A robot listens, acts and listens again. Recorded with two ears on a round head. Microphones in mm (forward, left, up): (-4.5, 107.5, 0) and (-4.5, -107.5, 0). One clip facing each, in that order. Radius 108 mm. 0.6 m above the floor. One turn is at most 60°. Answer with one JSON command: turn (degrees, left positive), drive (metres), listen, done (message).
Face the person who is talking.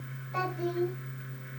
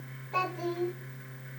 {"turn": -60}
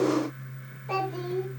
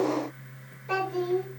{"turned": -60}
{"turn": -15}
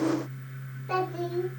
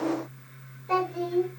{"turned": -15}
{"done": "Found it: a child speaking, straight ahead, over 4 m away."}